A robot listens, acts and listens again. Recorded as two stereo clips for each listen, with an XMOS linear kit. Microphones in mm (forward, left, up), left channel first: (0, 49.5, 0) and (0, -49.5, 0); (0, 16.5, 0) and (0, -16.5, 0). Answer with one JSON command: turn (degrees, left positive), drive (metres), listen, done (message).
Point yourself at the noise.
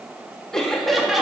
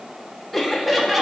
{"turn": -30}
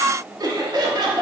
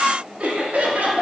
{"turn": -130}
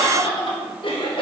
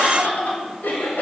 {"turn": 65}
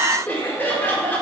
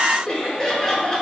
{"turn": 20}
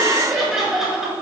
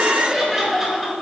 {"done": "Facing the laughter."}